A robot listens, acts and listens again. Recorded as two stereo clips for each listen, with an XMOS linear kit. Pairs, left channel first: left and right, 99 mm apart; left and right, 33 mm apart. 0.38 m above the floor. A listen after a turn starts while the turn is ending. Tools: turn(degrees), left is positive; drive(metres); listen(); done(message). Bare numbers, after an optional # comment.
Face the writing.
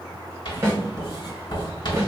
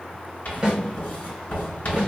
# The writing: about 50° left or 130° left.
turn(50)
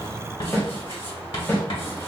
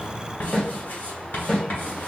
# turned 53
# So it is at 75° left.
turn(75)
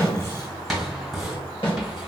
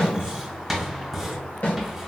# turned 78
done("Facing the writing, 1 to 2 m away.")